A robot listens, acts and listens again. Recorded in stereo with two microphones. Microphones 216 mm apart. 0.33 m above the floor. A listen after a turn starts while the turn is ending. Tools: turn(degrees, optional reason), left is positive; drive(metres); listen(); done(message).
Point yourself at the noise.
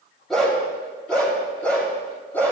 turn(degrees=30)
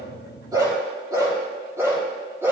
turn(degrees=-10, reason="So it is at 10° right.")
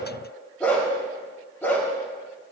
turn(degrees=10, reason="The dog barking is now 10° left.")
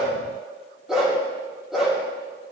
done("Facing the dog barking, over 4 m away.")